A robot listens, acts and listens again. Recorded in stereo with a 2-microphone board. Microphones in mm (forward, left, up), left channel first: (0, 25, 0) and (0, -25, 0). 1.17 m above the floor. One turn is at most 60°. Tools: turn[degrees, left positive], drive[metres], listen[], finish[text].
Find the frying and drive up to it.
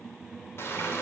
Thought: The frying: about 55° left or 125° left.
Action: turn[55]
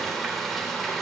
Action: drive[1.0]
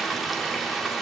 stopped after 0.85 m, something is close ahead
Action: finish[Something is in my way. I am facing the frying but have not reached it.]